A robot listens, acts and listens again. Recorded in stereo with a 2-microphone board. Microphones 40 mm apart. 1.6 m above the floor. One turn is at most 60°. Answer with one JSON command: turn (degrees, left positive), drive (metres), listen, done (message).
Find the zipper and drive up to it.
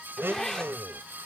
{"turn": 30}
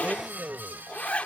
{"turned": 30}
{"turn": 60}
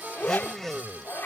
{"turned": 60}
{"turn": 60}
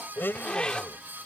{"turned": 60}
{"turn": 25}
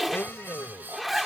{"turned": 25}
{"drive": 1.0}
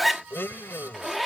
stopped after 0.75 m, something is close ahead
{"done": "Arrived at the zipper, straight ahead."}